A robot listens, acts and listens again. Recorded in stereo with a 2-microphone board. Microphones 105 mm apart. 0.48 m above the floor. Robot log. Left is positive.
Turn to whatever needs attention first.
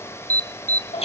note: The alarm: about 35° right or 145° right.
cmd yaw -35
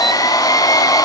cmd idle
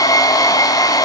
cmd idle
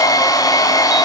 end: I heard an alarm, but can't make it out now. It was about straight ahead or 110° right.